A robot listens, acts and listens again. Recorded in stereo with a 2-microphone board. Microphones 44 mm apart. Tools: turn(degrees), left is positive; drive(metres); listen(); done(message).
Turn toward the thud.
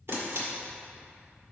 listen()
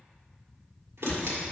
turn(degrees=45)
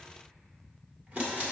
listen()
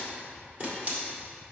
done("I heard a thud, but can't make it out now. It was about straight ahead or 90° left.")